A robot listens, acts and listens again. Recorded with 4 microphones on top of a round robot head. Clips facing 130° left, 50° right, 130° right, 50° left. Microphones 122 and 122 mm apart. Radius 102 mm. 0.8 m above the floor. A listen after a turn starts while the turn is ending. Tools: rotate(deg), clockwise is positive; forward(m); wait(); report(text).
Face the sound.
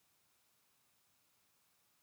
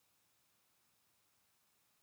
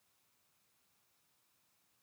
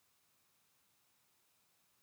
wait()
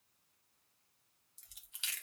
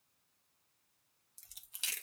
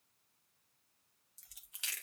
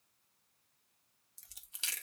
report("Found it: chewing, straight ahead.")